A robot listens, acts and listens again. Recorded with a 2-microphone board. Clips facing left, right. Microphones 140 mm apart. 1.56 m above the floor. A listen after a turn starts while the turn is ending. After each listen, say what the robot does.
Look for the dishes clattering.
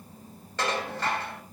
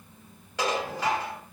Turn 30° right.
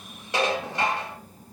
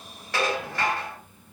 Turn 20° left.
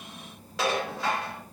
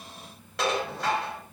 Found it: dishes clattering, straight ahead, 2 to 4 m away.